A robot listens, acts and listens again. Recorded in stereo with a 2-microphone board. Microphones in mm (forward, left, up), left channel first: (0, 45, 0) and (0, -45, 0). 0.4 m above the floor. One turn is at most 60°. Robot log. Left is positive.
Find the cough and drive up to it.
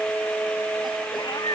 cmd idle
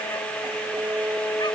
cmd idle
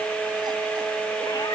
end: I can't make out a cough, only a cat meowing.